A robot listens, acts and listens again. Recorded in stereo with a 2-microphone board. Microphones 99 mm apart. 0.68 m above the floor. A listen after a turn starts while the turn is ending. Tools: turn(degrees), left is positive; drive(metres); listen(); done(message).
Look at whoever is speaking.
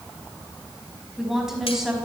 turn(degrees=-30)
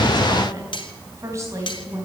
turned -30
turn(degrees=-145)
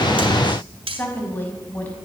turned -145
turn(degrees=20)
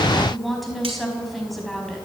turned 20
done("Facing the woman speaking.")